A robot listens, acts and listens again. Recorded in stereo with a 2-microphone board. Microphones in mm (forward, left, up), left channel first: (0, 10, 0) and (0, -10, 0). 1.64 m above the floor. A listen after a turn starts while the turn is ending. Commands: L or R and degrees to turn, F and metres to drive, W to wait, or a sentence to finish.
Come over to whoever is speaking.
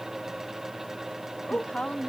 L75
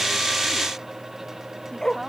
W
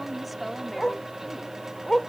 F1.0
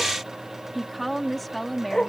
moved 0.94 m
F1.0
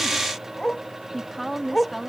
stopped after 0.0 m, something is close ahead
Blocked. The woman speaking is further on, straight ahead.